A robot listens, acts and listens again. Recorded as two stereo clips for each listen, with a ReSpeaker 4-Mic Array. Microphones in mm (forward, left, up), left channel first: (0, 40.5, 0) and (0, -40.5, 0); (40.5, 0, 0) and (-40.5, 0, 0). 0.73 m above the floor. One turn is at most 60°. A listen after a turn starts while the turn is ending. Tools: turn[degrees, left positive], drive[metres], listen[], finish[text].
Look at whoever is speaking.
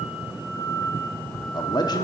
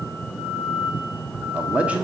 Thought: The man speaking: 110° left.
Action: turn[60]
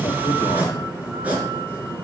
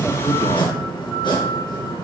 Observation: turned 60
Thought: Nothing new. It was at 50° left.
Action: turn[50]
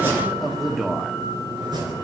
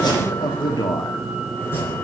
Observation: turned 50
Action: finish[Facing the man speaking, 1 to 2 m away.]